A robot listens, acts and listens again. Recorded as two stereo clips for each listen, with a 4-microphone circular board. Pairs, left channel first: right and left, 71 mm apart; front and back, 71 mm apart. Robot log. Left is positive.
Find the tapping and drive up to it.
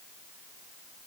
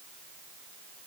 cmd idle
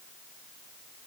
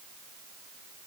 cmd idle
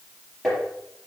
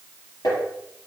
cmd fwd 1.0
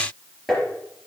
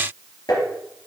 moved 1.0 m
cmd fwd 1.0
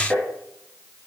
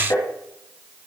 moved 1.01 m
cmd fwd 1.0
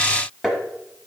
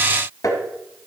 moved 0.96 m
cmd fwd 1.0
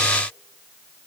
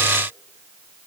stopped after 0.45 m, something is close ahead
cmd idle
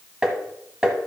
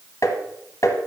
note: The tapping is now 10° left.
cmd yaw +10
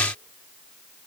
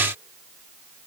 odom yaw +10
cmd idle
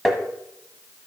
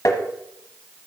end: I am next to the tapping.